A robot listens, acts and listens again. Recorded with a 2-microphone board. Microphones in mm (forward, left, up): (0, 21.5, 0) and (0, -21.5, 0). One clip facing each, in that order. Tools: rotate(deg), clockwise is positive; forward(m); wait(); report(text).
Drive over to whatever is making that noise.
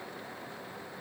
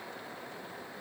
wait()
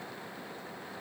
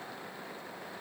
wait()
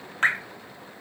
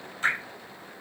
rotate(-60)
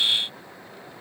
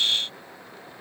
wait()
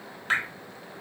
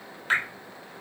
forward(1.0)
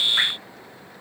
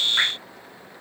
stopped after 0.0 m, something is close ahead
report("Blocked. The dripping is further on, straight ahead.")